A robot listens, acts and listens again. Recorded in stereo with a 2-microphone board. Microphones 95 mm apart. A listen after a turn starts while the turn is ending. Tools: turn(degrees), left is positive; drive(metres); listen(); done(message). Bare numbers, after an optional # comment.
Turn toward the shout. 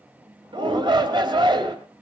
# The shout: about 55° right or 125° right.
turn(-55)
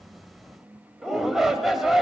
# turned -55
done("Found it: a shout, straight ahead.")